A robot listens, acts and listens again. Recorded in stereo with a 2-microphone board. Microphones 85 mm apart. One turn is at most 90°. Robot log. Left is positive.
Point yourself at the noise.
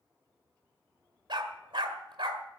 note: The dog barking: about 75° right or 105° right.
cmd yaw -75
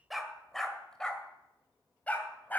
note: So it is at 20° left.
cmd yaw +20
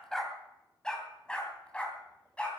note: The dog barking is now 15° left.
cmd yaw +15
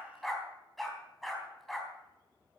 end: Found it: a dog barking, straight ahead.